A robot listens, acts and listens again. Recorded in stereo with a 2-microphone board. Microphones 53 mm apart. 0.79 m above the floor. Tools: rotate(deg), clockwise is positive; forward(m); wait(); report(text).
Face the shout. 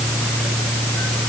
wait()
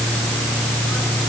wait()
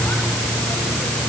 report("I can't make out a shout.")